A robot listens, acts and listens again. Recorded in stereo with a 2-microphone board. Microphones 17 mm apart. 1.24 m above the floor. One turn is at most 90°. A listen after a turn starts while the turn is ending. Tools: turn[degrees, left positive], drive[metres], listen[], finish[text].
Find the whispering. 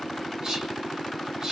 Thought: The whispering: about 45° right or 135° right.
Action: turn[-45]
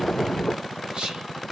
Thought: So it is at 90° right.
Action: turn[-90]
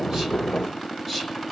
Thought: The whispering is now 10° right.
Action: turn[-10]
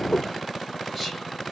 Action: listen[]
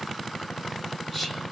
Action: listen[]
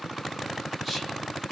Action: finish[Facing the whispering.]